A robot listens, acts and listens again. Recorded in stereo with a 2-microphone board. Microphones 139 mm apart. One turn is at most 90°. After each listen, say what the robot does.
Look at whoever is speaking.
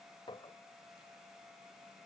Keep listening.
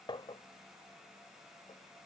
Keep listening.
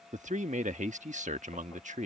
Turn 60° right.
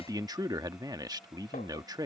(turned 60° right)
Turn 30° right.
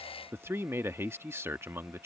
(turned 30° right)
Turn 20° right.
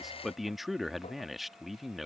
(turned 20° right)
Facing the man speaking.